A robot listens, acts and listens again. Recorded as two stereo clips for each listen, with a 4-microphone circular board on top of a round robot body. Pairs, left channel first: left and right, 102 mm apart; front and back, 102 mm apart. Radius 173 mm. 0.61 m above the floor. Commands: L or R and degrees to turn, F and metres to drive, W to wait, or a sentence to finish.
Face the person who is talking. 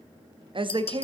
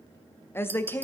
R65
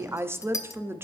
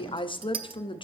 R25
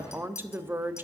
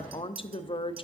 R25
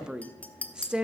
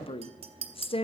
R10
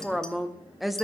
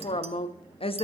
Facing the woman speaking, 1 to 2 m away.